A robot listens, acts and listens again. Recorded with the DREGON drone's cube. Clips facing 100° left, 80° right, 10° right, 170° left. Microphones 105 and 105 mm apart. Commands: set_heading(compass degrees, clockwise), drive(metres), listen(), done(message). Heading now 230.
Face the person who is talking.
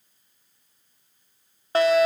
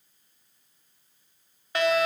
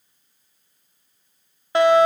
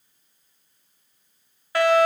listen()
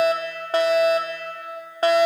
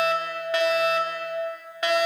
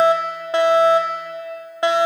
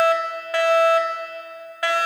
listen()
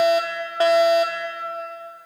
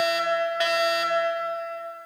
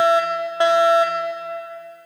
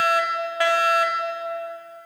done("I can't make out anyone speaking, only a fire alarm.")